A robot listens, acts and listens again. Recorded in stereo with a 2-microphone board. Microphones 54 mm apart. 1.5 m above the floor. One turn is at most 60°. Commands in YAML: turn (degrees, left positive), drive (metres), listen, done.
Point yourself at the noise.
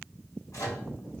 turn: 60
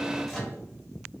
done: "Found it: a microwave, straight ahead."